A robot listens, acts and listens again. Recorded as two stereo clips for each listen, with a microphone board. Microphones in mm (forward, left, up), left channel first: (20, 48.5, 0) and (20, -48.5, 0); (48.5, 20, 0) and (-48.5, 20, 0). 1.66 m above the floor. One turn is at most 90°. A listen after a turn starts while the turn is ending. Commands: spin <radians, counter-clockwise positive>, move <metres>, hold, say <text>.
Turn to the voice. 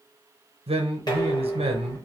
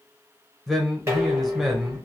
spin -1.48
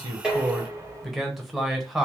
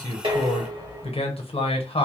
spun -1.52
say Found it: a man speaking, straight ahead.